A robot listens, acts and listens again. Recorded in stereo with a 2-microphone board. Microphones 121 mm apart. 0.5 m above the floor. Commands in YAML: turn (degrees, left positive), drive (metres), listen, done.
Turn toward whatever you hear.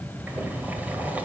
turn: -30
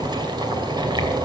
turn: -140
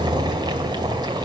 turn: -40
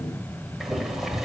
done: "Facing the boiling."